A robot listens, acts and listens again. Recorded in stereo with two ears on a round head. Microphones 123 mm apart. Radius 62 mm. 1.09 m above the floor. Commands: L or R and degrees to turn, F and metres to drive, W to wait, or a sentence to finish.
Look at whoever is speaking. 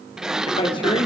L35
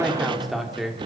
Found it: a man speaking, straight ahead.